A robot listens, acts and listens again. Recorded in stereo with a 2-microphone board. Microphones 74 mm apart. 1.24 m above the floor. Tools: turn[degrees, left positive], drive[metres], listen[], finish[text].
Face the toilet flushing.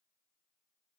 Action: listen[]
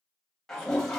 Action: turn[30]
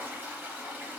Thought: So it is at 30° right.
Action: turn[-30]
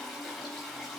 Action: finish[Found it: a toilet flushing, straight ahead, under 1 m away.]